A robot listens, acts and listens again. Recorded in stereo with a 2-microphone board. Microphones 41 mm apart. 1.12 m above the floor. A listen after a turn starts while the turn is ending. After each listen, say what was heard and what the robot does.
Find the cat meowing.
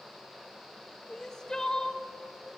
Keep listening.
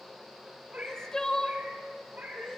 The cat meowing: about 40° right or 140° right. Turn 40° right.
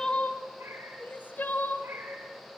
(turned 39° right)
So it is at 100° right. Turn 100° right.
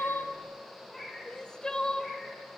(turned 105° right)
Facing the cat meowing.